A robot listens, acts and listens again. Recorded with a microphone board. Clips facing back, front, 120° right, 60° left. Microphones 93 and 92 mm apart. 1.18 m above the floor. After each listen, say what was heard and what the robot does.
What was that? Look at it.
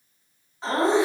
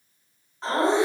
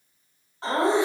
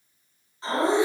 The laughter: 90° right. Turn 90° right.
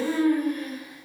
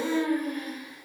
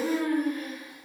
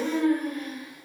Found it: laughter, straight ahead.